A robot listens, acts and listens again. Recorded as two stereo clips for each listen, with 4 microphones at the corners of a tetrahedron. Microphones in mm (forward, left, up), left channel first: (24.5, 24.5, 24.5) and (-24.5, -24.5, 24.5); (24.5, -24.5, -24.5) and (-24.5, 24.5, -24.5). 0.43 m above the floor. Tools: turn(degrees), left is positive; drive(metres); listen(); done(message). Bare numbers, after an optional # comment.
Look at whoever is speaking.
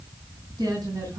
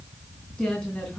# The woman speaking: 125° right.
turn(-125)
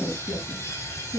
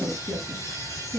# The woman speaking is now 30° left.
turn(30)
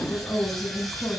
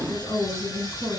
# The woman speaking is now 10° right.
turn(-10)
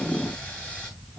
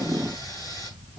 listen()
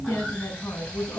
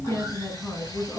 done("Found it: a woman speaking, straight ahead.")